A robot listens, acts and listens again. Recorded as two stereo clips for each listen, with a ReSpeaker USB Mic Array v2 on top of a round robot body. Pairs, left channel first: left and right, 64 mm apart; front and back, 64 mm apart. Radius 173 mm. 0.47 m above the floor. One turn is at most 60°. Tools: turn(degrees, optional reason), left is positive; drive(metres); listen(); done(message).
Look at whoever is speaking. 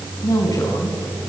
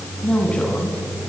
turn(degrees=60, reason="The woman speaking: 70° left.")
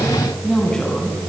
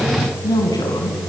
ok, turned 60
turn(degrees=10, reason="The woman speaking is now 10° left.")
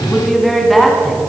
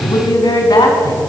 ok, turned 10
done("Found it: a woman speaking, straight ahead.")